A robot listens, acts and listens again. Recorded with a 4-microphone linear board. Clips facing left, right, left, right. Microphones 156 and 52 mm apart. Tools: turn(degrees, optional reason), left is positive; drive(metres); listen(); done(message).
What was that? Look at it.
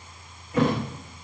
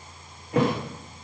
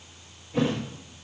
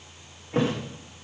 turn(degrees=-70, reason="The thud: about 70° right or 110° right.")
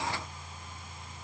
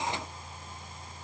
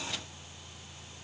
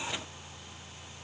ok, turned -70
listen()
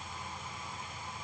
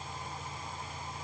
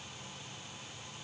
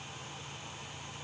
done("I heard a thud, but can't make it out now. It was about straight ahead or 40° right.")